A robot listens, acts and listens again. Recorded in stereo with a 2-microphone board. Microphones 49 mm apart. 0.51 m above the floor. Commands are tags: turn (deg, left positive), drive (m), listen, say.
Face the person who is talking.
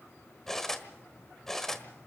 <listen/>
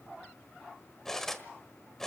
<listen/>
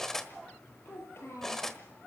<turn deg="65"/>
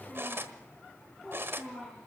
<say>Facing the child speaking.</say>